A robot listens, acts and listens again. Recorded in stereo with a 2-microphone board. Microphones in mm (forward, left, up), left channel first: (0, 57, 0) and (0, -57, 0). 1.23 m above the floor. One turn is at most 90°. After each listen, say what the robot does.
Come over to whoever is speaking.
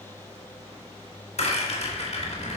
Turn 65° right.
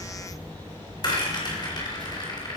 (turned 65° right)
Turn 45° right.
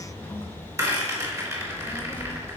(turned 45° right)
Turn 20° left.
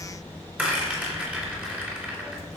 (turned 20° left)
Drive 1.0 m forward.
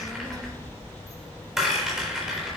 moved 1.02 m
Drive 1.0 m forward.
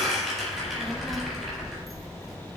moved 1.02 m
Drive 1.0 m forward.
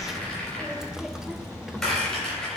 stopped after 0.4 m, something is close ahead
I am next to the child speaking.